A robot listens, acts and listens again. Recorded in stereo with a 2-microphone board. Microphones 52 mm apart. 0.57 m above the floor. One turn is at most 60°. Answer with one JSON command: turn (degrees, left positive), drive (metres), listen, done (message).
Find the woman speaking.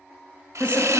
{"turn": 25}
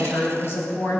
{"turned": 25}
{"turn": 60}
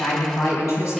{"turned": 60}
{"turn": 60}
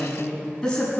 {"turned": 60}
{"turn": 15}
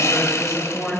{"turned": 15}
{"done": "Facing the woman speaking, over 4 m away."}